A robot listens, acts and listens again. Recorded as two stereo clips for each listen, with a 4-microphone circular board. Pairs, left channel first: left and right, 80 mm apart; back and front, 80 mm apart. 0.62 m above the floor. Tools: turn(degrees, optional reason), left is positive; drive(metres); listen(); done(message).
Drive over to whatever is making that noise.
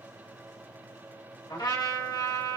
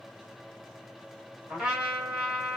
turn(degrees=80, reason="The trumpet: 80° left.")
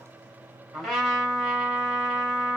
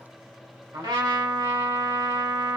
drive(metres=1.0)
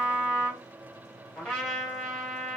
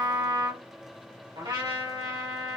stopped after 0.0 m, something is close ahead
turn(degrees=10, reason="The trumpet is now 10° left.")
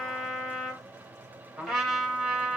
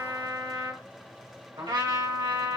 done("Blocked. The trumpet is further on, straight ahead.")